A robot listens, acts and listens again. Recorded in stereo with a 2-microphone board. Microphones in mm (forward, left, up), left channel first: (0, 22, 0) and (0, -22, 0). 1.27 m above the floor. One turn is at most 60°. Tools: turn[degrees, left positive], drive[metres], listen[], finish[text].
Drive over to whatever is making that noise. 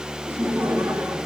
Action: turn[-60]
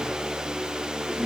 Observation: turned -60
Thought: So it is at 30° right.
Action: turn[-30]
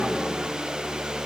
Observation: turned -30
Action: listen[]
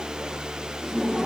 Action: drive[1.0]
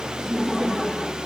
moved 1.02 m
Action: drive[1.0]
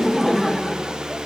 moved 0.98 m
Action: drive[1.0]
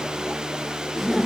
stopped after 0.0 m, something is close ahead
Action: finish[Arrived at the laughter, straight ahead.]